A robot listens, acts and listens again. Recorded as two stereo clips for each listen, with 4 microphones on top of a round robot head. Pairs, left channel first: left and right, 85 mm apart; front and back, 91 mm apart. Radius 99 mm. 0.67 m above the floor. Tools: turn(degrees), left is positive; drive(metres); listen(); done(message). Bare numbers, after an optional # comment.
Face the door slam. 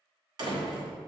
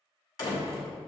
# The door slam: 55° right.
turn(-55)
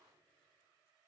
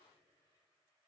done("I heard a door slam from this way, but can't make it out now.")